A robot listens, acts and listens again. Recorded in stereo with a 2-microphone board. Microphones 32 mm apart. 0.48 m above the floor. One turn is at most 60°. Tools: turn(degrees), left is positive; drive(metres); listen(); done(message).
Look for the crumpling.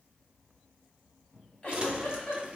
turn(degrees=-35)
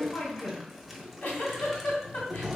done("Found it: crumpling, straight ahead, under 1 m away.")